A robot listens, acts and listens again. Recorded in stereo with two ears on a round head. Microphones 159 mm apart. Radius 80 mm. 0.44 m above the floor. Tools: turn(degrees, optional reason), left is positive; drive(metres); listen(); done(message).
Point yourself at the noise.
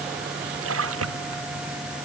turn(degrees=-90)
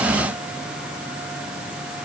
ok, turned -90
done("I heard a splash from this way, but can't make it out now.")